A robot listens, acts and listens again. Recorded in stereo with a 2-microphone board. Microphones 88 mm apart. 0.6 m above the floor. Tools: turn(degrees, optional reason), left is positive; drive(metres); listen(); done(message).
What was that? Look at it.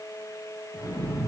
turn(degrees=-30)
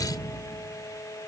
turn(degrees=25, reason="So it is at 25° left.")
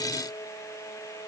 done("I heard an explosion from this way, but can't make it out now.")